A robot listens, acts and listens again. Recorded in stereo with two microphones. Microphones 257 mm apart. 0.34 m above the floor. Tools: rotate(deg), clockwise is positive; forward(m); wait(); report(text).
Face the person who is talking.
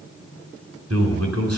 rotate(70)
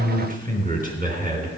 rotate(30)
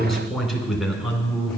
report("Facing the man speaking.")